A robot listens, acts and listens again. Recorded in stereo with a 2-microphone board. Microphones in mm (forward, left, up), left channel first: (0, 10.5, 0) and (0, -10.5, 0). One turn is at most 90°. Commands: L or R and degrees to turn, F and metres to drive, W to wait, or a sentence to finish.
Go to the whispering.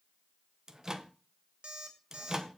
W
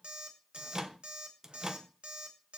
W
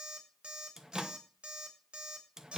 I can't make out whispering to turn to.